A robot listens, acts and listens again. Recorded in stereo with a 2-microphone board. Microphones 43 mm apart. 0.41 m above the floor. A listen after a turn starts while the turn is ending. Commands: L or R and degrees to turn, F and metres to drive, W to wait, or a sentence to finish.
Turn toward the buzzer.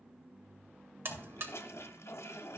R55
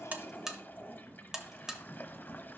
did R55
R15
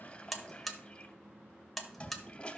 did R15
Facing the buzzer, under 1 m away.